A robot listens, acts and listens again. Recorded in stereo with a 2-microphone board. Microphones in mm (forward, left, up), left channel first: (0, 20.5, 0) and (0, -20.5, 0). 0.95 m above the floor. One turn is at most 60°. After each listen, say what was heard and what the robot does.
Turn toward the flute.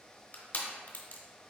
Keep listening.
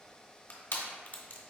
Keep listening.
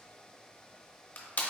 I can't make out a flute to turn to.